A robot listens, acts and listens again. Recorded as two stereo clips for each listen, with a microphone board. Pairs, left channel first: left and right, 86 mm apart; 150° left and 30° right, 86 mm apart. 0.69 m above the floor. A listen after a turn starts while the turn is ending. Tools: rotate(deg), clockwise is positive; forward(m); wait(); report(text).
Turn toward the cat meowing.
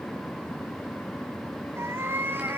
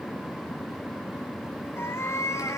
rotate(155)
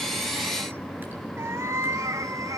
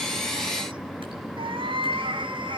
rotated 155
rotate(40)
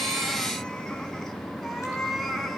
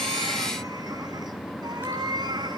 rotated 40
report("Facing the cat meowing.")